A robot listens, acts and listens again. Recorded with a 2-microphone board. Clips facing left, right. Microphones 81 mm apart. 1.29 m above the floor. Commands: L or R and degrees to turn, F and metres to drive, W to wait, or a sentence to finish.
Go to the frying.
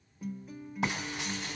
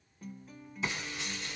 L65
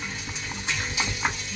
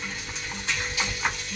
L20
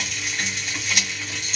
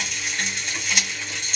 F1.0
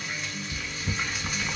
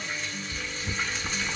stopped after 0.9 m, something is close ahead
L10
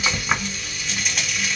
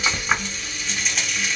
Arrived at the frying, straight ahead.